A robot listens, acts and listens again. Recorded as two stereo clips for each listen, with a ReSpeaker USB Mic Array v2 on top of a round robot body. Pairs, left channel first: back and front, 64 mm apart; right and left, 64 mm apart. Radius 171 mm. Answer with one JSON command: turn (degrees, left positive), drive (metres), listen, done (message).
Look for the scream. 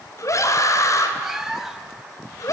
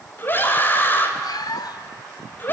{"turn": -150}
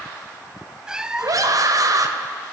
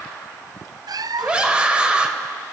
{"turn": 15}
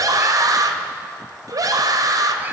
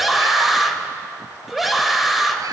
{"done": "Facing the scream, 2 to 4 m away."}